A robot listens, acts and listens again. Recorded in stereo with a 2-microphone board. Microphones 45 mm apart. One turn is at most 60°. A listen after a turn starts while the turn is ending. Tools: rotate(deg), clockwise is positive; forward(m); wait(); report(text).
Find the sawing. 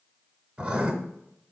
wait()
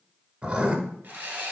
rotate(35)
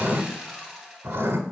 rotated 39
report("Found it: sawing, straight ahead.")